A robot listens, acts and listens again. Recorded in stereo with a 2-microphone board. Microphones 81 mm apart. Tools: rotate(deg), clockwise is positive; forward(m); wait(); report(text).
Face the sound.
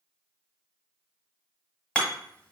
rotate(-15)
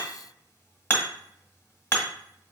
rotate(-150)
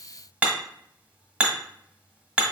rotate(15)
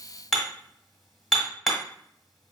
report("Found it: hammering, straight ahead.")